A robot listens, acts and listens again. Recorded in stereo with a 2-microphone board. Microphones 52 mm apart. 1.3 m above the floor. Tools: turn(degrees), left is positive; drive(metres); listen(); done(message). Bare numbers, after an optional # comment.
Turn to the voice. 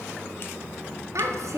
# The child speaking: about 75° right or 105° right.
turn(-75)
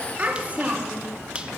# So it is at 30° right.
turn(-30)
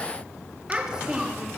# The child speaking is now 15° right.
turn(-15)
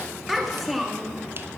done("Facing the child speaking, 1 to 2 m away.")